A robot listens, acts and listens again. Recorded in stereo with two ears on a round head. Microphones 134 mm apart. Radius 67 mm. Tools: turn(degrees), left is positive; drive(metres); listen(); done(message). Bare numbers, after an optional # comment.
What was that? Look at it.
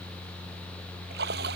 turn(-90)
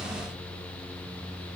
done("I heard a splash from this way, but can't make it out now.")